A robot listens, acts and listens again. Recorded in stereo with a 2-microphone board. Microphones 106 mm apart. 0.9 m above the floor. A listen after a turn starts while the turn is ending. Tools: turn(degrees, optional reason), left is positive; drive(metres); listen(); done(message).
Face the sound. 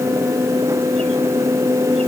listen()
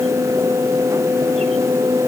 listen()
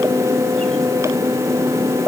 done("I can't make out anything to turn to.")